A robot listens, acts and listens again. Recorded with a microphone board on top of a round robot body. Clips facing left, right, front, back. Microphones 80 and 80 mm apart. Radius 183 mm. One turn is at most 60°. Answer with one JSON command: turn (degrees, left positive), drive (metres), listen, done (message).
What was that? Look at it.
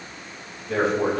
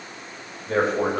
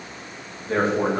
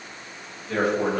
{"turn": -55}
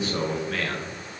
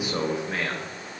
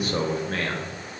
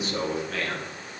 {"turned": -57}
{"turn": -35}
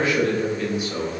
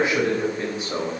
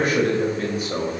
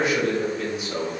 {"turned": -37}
{"turn": -45}
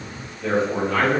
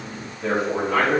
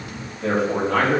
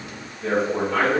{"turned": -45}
{"turn": -15}
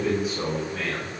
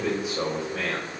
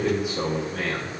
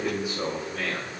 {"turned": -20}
{"done": "Found it: a man speaking, straight ahead, 2 to 4 m away."}